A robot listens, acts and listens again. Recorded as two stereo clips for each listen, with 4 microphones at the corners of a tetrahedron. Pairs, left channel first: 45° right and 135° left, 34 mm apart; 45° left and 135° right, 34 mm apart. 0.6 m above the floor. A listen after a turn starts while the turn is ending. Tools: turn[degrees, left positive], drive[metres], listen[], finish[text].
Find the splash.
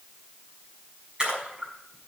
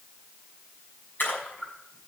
Thought: The splash: 70° left.
Action: turn[70]
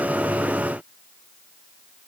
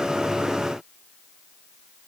Action: finish[Facing where the splash came from. I can't hear it now.]